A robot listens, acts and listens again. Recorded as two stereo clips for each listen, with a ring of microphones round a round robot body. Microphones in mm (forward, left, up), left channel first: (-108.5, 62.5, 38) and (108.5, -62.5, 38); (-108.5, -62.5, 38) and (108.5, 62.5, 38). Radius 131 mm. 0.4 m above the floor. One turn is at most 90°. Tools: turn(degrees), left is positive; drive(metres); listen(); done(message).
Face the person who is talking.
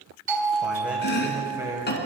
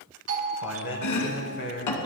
turn(degrees=-90)
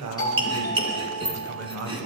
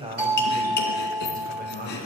turn(degrees=-15)
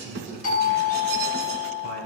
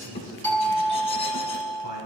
turn(degrees=20)
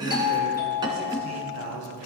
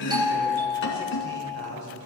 done("Found it: a man speaking, straight ahead, 2 to 4 m away.")